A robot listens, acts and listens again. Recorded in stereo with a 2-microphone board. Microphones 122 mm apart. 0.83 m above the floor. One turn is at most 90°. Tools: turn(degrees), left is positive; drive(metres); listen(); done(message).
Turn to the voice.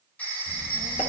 turn(degrees=60)
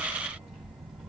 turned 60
done("Facing the child speaking, 2 to 4 m away.")